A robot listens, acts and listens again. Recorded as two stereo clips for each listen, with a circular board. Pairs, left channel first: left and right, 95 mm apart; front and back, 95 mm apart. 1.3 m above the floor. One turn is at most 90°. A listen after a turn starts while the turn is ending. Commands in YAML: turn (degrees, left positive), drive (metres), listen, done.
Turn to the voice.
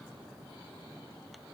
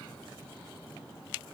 listen: true
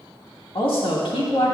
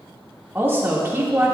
turn: 90
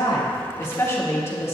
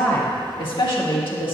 turn: 30
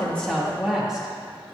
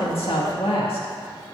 done: "Facing the woman speaking."